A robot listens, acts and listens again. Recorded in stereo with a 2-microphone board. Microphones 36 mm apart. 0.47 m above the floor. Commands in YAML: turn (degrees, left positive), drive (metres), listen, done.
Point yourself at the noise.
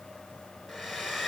turn: -30
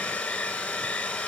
turn: 25
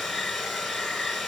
done: "Found it: a hair dryer, straight ahead, 2 to 4 m away."